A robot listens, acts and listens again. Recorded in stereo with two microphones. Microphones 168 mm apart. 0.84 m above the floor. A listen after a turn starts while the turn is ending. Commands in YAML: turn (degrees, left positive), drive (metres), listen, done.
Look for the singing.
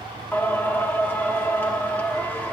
turn: 30
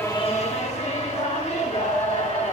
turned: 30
turn: 140
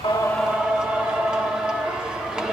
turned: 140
done: "Found it: singing, straight ahead."